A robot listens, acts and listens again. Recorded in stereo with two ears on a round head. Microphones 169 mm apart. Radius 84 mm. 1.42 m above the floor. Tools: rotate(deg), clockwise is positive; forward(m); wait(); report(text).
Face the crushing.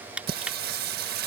rotate(30)
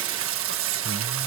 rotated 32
wait()
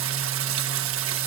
wait()
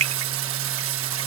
rotate(140)
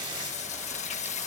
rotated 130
rotate(10)
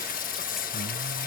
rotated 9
wait()
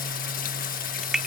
report("Facing the crushing.")